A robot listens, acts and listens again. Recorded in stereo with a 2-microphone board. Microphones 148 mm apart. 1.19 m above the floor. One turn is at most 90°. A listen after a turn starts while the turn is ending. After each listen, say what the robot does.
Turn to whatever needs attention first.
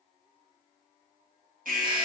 Turn 70° right.
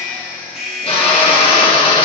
Found it: an alarm, straight ahead, 1 to 2 m away.